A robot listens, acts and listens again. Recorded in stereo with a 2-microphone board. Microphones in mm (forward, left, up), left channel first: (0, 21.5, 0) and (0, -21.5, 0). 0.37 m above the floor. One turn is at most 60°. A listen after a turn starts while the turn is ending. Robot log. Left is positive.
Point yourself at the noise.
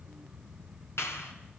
note: The clap: about 75° left or 105° left.
cmd yaw +60
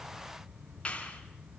note: So it is at 25° left.
cmd yaw +25
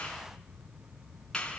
note: The clap is now 15° left.
cmd yaw +15
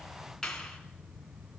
end: Facing the clap.